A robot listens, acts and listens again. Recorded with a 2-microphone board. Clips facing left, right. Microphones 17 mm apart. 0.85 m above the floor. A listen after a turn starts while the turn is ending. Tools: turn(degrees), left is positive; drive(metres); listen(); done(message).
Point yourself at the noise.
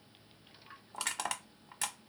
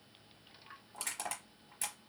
turn(degrees=50)
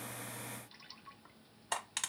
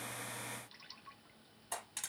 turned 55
turn(degrees=60)
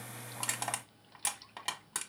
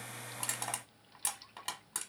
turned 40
turn(degrees=20)
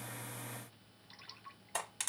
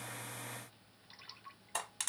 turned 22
done("Found it: crushing, straight ahead.")